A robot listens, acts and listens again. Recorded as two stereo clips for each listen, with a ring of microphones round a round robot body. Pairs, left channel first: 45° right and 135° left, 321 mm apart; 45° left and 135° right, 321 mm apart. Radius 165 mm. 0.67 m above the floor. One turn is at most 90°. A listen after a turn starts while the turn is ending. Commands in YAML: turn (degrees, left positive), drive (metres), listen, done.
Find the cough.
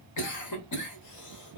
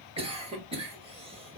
turn: -65
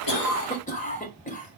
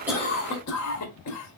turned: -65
turn: 20
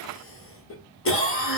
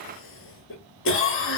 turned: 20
done: "Facing the cough."